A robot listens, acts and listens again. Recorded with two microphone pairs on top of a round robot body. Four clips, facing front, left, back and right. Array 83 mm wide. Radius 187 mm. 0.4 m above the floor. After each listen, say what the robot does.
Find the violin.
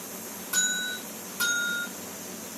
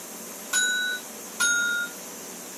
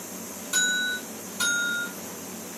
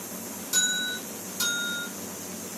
Keep listening.
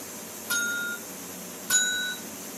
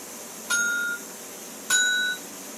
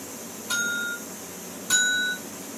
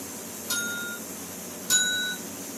Keep listening.
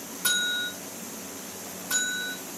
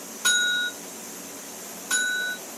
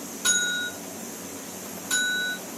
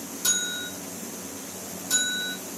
I can't make out a violin, only a bell.